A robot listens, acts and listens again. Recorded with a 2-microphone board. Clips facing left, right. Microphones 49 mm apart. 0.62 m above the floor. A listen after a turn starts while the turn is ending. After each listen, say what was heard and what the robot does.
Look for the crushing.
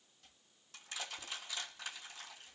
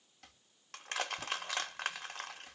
The crushing: about 60° right or 120° right. Turn 60° right.
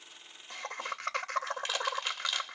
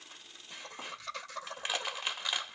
So it is at 15° right. Turn 15° right.
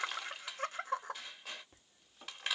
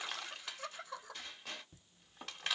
Found it: crushing, straight ahead.